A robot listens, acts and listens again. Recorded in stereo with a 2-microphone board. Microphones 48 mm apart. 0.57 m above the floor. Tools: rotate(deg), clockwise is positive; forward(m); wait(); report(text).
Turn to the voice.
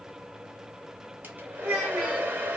rotate(-30)
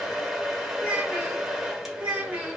rotate(30)
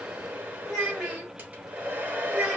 report("Found it: a child speaking, straight ahead.")